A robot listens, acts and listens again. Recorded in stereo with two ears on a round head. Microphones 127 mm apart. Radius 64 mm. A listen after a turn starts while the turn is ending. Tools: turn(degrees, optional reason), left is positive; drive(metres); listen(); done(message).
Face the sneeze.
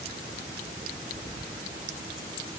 listen()
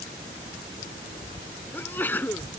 turn(degrees=30)
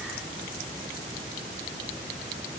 listen()
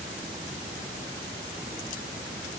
done("I heard a sneeze, but can't make it out now. It was about 15° right or 135° left.")